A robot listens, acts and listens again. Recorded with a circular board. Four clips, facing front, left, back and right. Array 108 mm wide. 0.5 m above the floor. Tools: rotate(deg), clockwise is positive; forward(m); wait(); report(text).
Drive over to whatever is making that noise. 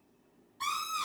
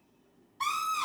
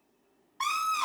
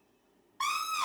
rotate(150)
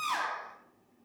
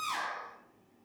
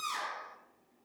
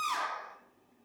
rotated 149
forward(1.0)
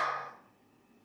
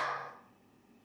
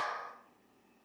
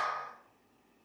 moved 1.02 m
forward(1.0)
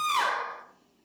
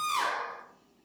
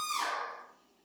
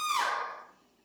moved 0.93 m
forward(1.0)
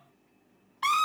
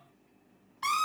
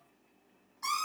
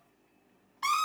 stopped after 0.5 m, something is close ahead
report("I am next to the scream.")